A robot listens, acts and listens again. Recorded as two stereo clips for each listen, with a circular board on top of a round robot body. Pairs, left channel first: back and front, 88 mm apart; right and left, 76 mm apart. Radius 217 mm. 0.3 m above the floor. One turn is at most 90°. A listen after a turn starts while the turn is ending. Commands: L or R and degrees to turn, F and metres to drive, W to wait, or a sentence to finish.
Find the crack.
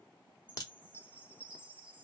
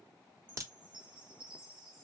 L90
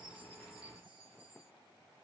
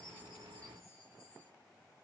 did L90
L45
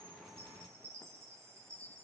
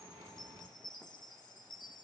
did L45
Facing where the crack came from. I can't hear it now.